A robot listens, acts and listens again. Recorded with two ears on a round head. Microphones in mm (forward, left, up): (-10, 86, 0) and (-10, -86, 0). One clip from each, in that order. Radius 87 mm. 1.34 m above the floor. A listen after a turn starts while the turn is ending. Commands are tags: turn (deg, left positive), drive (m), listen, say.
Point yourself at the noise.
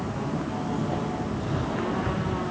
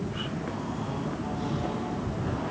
<listen/>
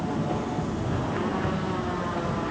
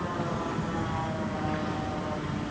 <listen/>
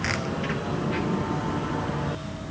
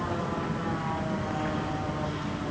<say>I can't make out anything.</say>